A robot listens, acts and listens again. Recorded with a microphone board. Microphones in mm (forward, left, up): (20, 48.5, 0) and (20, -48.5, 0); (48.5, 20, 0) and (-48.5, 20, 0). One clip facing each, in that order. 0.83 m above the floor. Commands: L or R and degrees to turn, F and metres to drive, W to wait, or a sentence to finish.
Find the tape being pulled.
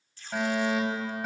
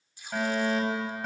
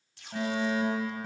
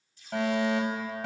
R15
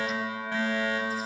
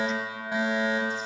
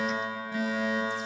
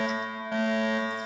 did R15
W
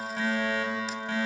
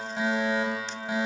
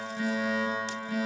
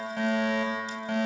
W
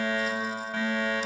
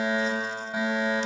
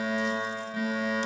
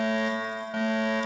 Facing where the tape being pulled came from. I can't hear it now.